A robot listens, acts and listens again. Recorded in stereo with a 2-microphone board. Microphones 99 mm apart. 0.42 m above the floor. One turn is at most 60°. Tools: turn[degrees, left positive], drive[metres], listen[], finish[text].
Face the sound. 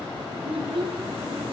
Thought: The child speaking: about 65° right or 115° right.
Action: turn[-60]
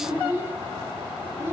Thought: So it is at 25° right.
Action: turn[-25]
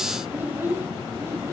Thought: The child speaking is now 25° right.
Action: turn[-25]
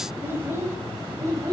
Thought: The child speaking is now 30° right.
Action: turn[-30]
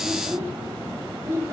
Thought: The child speaking is now 25° right.
Action: turn[-25]
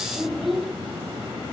Action: finish[Facing the child speaking.]